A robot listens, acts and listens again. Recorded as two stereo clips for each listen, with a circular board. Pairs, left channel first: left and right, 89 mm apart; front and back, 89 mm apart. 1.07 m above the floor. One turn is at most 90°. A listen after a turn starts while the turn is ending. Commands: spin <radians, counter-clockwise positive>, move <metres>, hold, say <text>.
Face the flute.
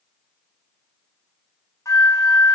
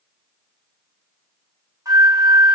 spin 1.57
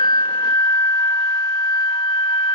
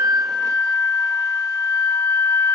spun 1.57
spin 0.87
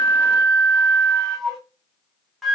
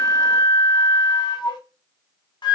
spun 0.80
say Facing the flute.